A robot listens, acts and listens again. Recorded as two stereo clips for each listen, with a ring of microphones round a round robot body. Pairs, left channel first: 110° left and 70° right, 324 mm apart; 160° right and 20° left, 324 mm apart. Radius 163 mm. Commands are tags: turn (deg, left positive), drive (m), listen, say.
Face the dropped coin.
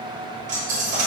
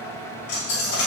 <turn deg="-135"/>
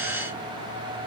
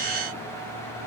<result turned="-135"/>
<say>I heard a dropped coin from this way, but can't make it out now.</say>